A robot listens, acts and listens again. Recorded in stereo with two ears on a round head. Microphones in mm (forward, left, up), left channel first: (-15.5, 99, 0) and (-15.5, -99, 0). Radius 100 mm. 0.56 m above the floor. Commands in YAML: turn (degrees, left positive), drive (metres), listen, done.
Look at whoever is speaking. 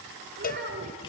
turn: -45
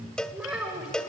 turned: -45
done: "Facing the child speaking."